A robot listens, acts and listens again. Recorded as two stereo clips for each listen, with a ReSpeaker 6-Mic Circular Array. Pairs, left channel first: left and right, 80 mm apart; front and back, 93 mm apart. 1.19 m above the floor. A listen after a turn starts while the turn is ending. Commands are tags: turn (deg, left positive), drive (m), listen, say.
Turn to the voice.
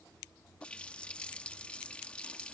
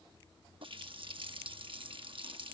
<listen/>
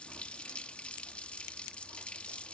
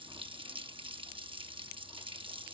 <listen/>
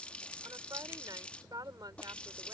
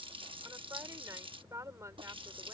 <turn deg="-120"/>
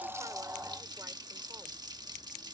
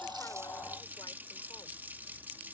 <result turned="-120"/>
<listen/>
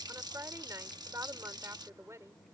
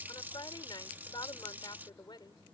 <turn deg="-40"/>
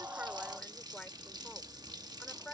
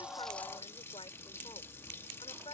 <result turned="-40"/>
<turn deg="10"/>
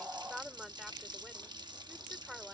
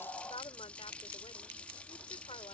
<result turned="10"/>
<say>Found it: a woman speaking, straight ahead.</say>